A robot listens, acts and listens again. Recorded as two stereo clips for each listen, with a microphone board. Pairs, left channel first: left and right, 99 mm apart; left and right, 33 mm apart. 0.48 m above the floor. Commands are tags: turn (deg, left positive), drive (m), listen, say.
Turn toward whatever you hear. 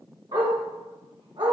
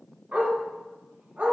<turn deg="-60"/>
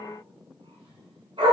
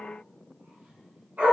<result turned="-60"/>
<turn deg="-60"/>
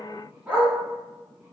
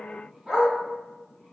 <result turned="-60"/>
<turn deg="-15"/>
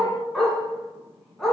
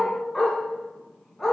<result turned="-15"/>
<say>Facing the dog barking.</say>